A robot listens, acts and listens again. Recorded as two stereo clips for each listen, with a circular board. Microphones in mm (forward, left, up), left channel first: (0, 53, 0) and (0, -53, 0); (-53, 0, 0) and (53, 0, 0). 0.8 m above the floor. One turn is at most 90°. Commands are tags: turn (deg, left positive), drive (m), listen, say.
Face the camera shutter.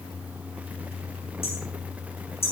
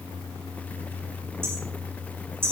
<listen/>
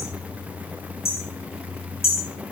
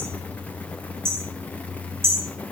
<listen/>
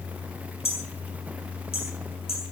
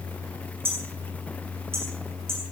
<say>I can't make out a camera shutter, only hammering.</say>